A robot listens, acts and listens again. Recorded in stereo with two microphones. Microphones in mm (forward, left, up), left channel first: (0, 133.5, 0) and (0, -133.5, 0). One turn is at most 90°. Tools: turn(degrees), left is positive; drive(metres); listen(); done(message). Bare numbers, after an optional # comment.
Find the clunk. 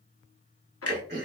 # The clunk: about 60° left or 120° left.
turn(60)
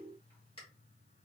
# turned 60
listen()
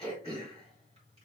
done("I heard a clunk, but can't make it out now. It was about straight ahead or 60° left.")